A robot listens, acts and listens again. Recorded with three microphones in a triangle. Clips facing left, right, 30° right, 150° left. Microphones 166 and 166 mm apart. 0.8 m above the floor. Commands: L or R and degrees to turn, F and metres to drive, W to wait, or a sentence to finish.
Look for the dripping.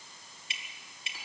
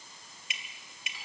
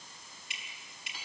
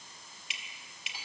L150
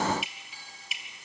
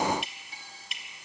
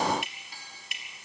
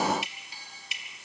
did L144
Facing the dripping, 2 to 4 m away.